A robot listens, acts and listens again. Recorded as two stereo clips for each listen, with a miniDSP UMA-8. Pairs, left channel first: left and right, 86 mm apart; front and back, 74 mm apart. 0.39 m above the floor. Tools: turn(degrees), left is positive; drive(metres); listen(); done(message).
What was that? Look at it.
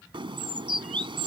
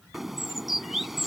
turn(degrees=-95)
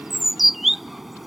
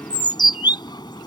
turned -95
done("Found it: a bird, straight ahead.")